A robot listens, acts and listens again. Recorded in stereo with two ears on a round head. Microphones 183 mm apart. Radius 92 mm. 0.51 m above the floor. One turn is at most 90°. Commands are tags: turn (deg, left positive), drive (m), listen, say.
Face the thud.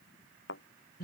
<turn deg="60"/>
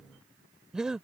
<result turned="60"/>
<listen/>
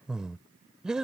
<say>I heard a thud, but can't make it out now. It was about straight ahead or 60° left.</say>